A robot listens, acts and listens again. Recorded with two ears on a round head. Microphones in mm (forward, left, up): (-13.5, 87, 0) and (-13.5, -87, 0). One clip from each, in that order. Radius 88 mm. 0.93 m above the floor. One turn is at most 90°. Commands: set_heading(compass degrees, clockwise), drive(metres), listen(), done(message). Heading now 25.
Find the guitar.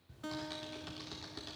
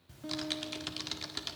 set_heading(320)
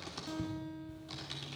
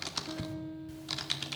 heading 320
set_heading(280)
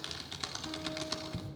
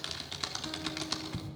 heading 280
listen()
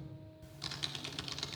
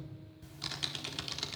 listen()
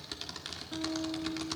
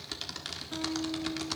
set_heading(290)
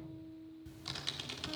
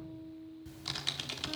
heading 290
done("Found it: a guitar, straight ahead.")